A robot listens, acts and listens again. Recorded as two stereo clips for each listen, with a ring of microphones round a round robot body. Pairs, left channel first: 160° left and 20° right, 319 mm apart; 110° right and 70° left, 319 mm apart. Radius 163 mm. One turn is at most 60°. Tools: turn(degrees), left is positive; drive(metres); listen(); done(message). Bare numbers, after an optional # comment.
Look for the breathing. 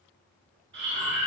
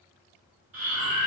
# The breathing: 30° left.
turn(30)
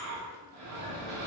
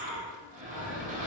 done("Found it: breathing, straight ahead, 1 to 2 m away.")